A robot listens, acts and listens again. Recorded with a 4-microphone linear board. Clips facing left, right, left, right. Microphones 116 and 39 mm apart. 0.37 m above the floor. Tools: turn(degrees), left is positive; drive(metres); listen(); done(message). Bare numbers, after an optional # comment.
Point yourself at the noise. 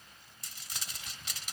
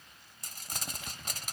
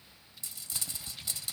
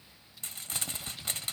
# The crumpling: about 45° right or 135° right.
turn(-45)
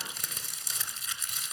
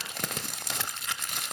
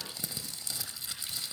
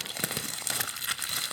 # So it is at 85° right.
turn(-85)
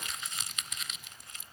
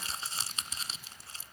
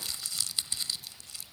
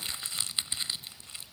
# The crumpling is now 35° right.
turn(-35)
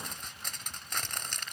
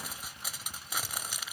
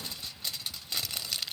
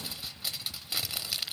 # The crumpling is now 10° right.
turn(-10)
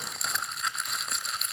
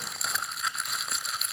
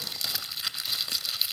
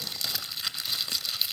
done("Found it: crumpling, straight ahead.")